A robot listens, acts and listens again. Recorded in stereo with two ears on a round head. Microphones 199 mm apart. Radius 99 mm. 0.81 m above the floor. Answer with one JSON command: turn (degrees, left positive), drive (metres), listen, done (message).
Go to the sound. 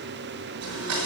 {"turn": -75}
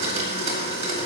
{"turn": -30}
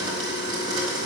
{"turn": -20}
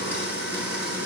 {"drive": 1.0}
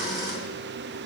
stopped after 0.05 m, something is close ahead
{"turn": -15}
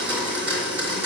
{"turn": -10}
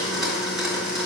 {"done": "Blocked. The blender is further on, straight ahead."}